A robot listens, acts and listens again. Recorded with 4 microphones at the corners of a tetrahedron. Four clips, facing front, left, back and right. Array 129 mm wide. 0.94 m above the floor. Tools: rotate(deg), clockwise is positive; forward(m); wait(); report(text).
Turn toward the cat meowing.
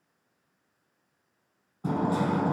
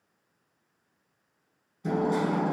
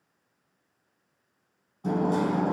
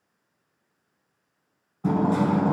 wait()
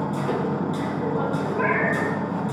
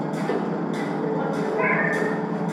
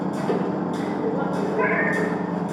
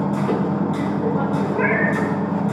rotate(65)
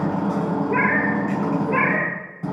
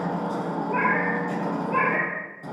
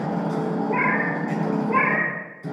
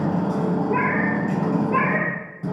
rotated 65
rotate(-10)
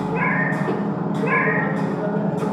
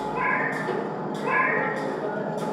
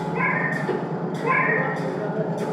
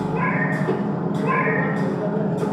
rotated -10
report("Found it: a cat meowing, straight ahead.")